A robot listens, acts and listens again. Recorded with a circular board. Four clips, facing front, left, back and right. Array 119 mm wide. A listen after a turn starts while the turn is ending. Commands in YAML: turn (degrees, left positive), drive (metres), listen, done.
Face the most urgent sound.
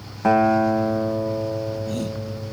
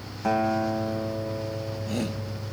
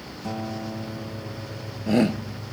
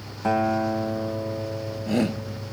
turn: -160
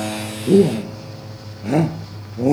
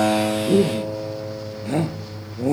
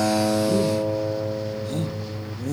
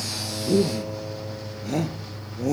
turn: 10
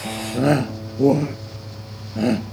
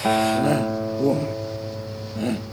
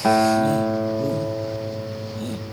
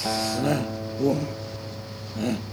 done: "Found it: a shout, straight ahead."